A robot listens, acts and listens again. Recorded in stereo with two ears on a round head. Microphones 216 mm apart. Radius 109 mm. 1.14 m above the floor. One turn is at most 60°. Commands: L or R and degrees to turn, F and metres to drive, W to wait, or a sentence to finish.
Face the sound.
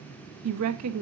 R60
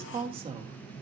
R25
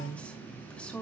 Facing the woman speaking.